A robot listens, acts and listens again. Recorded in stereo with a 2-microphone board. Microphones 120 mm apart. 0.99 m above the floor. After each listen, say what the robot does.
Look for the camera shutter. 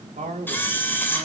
Turn 15° left.
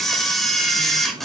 Found it: a camera shutter, straight ahead, 2 to 4 m away.